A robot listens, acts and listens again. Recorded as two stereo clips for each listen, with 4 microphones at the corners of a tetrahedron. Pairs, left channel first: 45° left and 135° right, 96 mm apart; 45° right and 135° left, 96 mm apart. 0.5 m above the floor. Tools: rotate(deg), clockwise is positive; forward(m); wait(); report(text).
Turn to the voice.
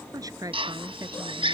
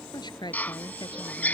rotate(85)
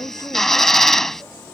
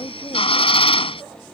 rotate(10)
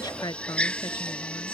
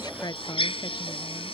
report("Found it: a woman speaking, straight ahead.")